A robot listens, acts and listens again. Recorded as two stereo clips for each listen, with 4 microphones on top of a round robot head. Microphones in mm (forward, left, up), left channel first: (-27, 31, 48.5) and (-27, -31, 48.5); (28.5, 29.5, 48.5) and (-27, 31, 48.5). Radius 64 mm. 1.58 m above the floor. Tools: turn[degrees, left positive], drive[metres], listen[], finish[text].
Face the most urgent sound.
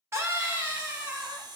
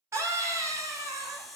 Thought: The scream: 135° right.
Action: turn[-135]
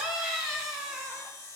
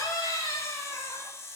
Thought: The scream is now 10° right.
Action: turn[-10]
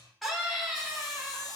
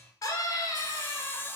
Action: finish[Facing the scream.]